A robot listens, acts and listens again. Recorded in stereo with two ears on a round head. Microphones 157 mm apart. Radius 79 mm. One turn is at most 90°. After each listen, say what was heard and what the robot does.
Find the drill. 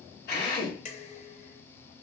The drill: about 65° left or 115° left. Turn 65° left.
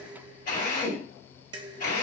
So it is at 50° left. Turn 50° left.
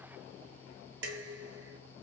Keep listening.
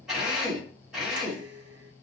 Facing the drill, 2 to 4 m away.